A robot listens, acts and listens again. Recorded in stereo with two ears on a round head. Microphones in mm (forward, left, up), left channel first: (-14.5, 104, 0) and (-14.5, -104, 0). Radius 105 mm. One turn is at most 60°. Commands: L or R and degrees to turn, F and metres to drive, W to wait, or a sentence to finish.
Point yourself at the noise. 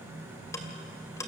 L30
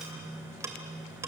R15
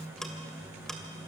Facing the ticking.